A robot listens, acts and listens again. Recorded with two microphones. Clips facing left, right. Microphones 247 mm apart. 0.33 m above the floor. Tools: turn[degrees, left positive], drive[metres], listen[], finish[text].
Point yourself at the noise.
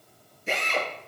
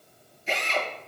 Thought: The drill: about 55° left or 125° left.
Action: turn[55]
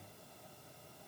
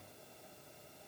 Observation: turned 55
Action: listen[]
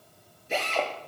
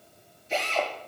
Thought: So it is at 65° left.
Action: turn[65]
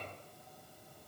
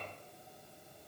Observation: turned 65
Action: listen[]
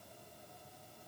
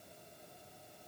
Action: listen[]
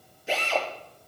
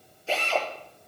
Thought: The drill is now 15° left.
Action: turn[15]
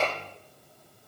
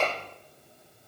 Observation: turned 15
Action: finish[Facing the drill, over 4 m away.]